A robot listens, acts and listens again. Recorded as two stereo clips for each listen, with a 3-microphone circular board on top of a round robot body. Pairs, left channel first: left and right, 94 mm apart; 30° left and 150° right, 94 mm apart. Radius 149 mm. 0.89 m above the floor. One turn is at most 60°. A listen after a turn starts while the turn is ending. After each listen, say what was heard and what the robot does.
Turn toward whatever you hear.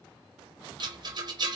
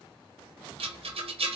The rattle: 135° right. Turn 60° right.
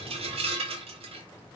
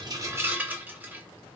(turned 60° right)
The rattle is now 75° right. Turn 60° right.
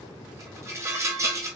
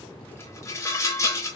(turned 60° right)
The rattle is now 30° right. Turn 30° right.
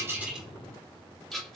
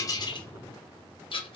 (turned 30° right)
Found it: a rattle, straight ahead, under 1 m away.